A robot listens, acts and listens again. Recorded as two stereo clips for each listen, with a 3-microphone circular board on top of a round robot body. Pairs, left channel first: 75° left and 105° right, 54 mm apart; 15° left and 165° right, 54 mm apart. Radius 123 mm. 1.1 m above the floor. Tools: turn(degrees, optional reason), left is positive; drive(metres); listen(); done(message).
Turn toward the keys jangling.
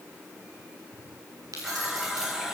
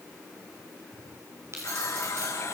turn(degrees=-125, reason="The keys jangling: 125° right.")
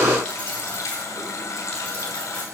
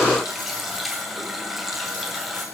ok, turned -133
listen()
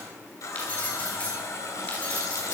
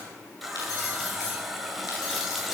done("Facing the keys jangling, over 4 m away.")